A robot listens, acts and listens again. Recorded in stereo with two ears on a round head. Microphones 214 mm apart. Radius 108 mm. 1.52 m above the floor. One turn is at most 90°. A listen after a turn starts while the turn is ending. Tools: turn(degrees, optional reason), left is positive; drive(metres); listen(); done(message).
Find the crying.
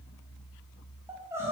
turn(degrees=-30)
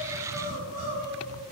turn(degrees=-90, reason="So it is at 140° right.")
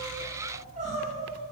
turn(degrees=-35, reason="The crying is now 35° right.")
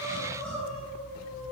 done("Found it: crying, straight ahead, 2 to 4 m away.")